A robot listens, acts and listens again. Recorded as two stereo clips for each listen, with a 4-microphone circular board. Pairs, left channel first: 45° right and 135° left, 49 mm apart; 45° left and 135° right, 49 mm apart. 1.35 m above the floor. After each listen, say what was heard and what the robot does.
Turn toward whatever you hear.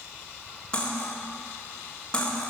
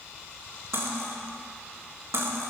The cutlery clinking: 115° right. Turn 115° right.
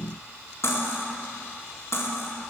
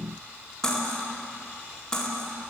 The cutlery clinking is now 30° right. Turn 30° right.
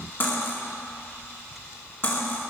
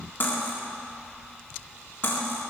Found it: cutlery clinking, straight ahead.